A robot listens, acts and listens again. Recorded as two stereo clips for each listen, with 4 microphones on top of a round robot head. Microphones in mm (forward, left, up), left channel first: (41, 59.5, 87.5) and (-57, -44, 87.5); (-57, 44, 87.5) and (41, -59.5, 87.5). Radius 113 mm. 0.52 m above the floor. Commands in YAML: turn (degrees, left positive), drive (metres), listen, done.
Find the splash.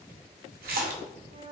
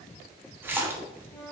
turn: -120
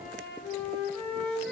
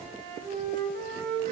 done: "I heard a splash from this way, but can't make it out now."